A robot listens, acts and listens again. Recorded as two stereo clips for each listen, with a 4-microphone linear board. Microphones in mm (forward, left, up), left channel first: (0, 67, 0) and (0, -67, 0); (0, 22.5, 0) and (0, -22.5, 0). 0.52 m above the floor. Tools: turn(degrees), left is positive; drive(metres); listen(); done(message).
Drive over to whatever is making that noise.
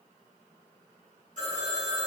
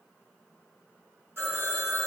turn(degrees=-70)
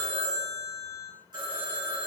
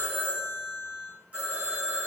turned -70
turn(degrees=-35)
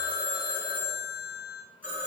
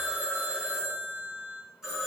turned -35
turn(degrees=-15)
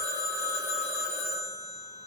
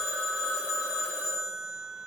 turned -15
drive(metres=1.0)
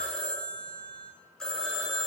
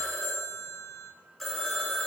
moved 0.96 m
drive(metres=1.0)
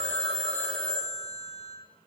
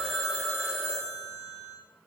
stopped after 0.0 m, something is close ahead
done("I am next to the phone ringing.")